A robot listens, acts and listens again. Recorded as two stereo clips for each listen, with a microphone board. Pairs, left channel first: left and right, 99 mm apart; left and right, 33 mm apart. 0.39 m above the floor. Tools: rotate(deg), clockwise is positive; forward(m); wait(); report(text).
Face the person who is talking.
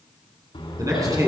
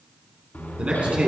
rotate(35)
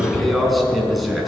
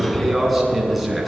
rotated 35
report("Found it: a man speaking, straight ahead, 2 to 4 m away.")